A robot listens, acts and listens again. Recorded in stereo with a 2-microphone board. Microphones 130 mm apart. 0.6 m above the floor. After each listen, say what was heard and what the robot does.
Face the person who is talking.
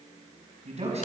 The man speaking: about 55° right or 125° right. Turn 55° right.
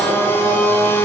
Keep listening.
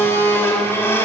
Keep listening.
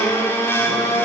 I heard a man speaking, but can't make it out now. It was about straight ahead or 70° right.